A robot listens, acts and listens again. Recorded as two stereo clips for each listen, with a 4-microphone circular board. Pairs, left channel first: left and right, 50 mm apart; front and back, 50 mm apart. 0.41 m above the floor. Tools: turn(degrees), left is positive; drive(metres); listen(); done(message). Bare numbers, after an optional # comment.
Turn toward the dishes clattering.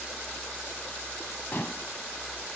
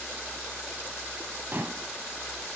# The dishes clattering: 140° left.
turn(140)
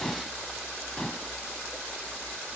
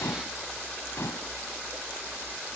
# The dishes clattering is now 15° left.
turn(15)
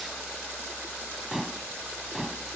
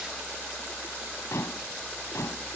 done("Facing the dishes clattering.")